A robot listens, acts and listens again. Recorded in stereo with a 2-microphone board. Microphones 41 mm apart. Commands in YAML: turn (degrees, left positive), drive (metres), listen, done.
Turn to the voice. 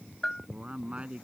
turn: -30
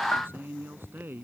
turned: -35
turn: -115
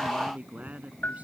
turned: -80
turn: -35
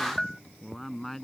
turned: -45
turn: 10
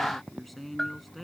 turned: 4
done: "Found it: a man speaking, straight ahead."